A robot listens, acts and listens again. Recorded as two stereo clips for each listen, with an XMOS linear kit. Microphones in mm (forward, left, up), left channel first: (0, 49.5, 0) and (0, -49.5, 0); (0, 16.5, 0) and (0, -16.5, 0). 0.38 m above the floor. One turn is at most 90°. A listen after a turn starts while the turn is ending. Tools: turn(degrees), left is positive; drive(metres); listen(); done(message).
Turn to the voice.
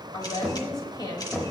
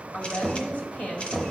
turn(degrees=50)
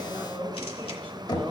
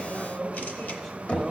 turn(degrees=15)
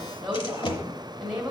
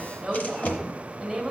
done("Found it: a woman speaking, straight ahead.")